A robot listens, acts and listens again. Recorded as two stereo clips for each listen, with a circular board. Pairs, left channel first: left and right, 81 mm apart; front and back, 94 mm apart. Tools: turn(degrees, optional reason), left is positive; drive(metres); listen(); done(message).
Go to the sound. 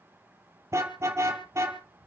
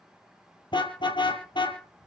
turn(degrees=-35, reason="The car horn: 35° right.")
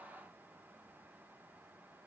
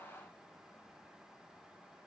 listen()
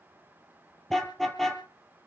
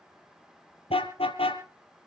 drive(metres=1.0)
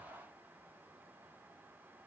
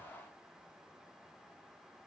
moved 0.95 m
listen()
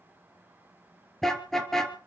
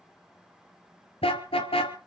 drive(metres=1.0)
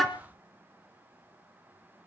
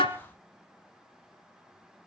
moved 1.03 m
drive(metres=1.0)
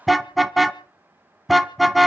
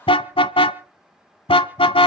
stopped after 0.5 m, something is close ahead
done("Arrived at the car horn, straight ahead.")